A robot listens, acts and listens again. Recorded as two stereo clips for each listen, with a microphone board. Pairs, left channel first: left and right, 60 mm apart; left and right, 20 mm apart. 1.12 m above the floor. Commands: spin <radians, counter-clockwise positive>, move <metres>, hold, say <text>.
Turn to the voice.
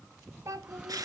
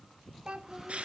spin -1.05
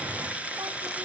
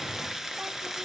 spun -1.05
hold
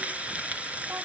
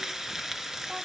hold
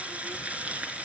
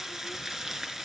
say I heard a child speaking, but can't make it out now. It was about straight ahead or 60° right.